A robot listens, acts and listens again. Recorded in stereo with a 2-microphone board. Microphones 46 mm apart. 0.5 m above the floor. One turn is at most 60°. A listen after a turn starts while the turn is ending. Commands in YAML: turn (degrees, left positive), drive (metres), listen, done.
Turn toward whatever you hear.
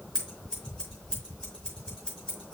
turn: 15
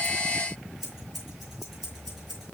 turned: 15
done: "Found it: scissors, straight ahead, over 4 m away."